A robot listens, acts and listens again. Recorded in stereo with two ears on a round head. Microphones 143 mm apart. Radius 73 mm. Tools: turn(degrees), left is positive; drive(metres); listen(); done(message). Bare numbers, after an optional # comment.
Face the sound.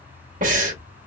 # The breathing: about 55° right or 125° right.
turn(-55)
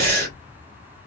# So it is at 65° right.
turn(-65)
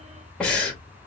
done("Found it: breathing, straight ahead.")